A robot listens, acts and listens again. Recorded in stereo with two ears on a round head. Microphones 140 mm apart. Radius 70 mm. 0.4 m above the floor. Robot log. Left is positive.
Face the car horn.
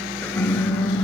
cmd yaw +90
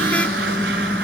note: So it is at 10° left.
cmd yaw +10
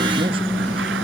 end: Found it: a car horn, straight ahead.